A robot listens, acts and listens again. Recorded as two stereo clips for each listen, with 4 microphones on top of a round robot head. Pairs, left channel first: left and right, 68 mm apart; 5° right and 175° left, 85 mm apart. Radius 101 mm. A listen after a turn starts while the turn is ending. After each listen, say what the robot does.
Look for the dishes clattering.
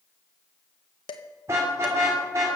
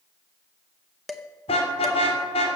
Turn 85° left.
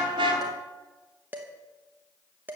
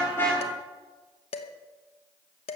Turn 20° right.
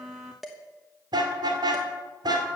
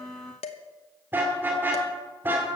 Found it: dishes clattering, straight ahead.